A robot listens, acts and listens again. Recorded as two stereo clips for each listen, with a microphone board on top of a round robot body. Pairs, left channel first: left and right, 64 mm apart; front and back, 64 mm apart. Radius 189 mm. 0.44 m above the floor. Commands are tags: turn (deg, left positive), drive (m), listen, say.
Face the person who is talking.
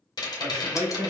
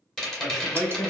<turn deg="-90"/>
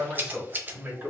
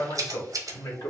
<turn deg="-25"/>
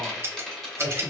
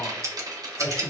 <turn deg="-20"/>
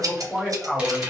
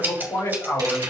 <say>Facing the man speaking, 2 to 4 m away.</say>